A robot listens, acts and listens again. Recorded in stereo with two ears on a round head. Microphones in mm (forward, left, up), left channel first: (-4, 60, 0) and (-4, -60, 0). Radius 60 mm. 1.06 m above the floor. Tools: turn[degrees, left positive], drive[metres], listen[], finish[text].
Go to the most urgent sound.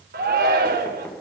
Action: turn[-90]
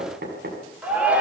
Thought: So it is at 10° right.
Action: turn[-10]
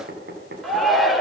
Action: drive[1.0]
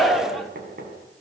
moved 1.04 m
Action: drive[1.0]
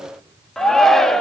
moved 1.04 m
Action: drive[1.0]
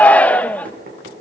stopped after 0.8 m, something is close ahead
Thought: The shout is now 10° left.
Action: turn[10]
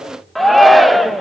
Action: finish[Arrived at the shout, straight ahead.]